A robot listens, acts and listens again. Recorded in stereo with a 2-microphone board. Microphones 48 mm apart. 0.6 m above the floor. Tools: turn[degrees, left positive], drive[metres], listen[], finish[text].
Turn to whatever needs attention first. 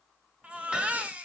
Thought: The baby crying: about 25° right or 155° right.
Action: turn[-25]
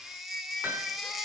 Action: finish[Facing the baby crying.]